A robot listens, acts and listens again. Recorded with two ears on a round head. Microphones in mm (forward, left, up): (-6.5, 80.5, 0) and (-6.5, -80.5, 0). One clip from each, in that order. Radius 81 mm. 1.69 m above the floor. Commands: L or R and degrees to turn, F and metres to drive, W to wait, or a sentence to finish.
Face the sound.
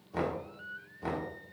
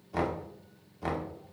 R25
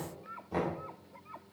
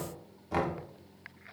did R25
R130
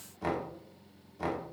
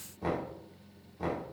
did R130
L35
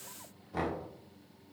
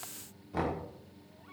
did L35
Found it: knocking, straight ahead, 1 to 2 m away.